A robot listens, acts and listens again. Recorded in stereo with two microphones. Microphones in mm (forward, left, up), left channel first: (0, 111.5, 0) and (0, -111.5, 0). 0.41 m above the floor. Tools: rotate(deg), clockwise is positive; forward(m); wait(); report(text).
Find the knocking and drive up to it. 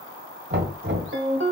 rotate(50)
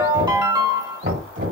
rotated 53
rotate(70)
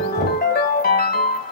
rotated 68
forward(1.0)
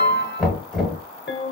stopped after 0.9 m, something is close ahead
report("Arrived at the knocking, straight ahead.")